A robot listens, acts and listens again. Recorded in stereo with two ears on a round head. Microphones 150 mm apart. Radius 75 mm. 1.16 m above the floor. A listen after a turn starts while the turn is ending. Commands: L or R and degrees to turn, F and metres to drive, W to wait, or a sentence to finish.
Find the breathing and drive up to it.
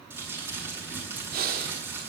R60
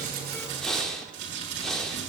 F1.0
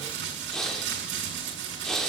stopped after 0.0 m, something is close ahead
Something is in my way. I am facing the breathing but have not reached it.